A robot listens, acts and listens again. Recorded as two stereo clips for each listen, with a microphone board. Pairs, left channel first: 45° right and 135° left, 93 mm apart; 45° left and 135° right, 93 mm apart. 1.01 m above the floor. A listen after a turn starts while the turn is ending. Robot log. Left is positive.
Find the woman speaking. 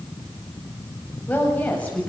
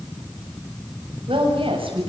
note: The woman speaking: 120° right.
cmd yaw -120
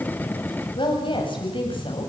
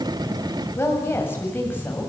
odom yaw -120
note: The woman speaking is now 25° right.
cmd yaw -25
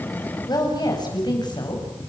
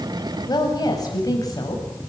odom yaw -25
end: Found it: a woman speaking, straight ahead, over 4 m away.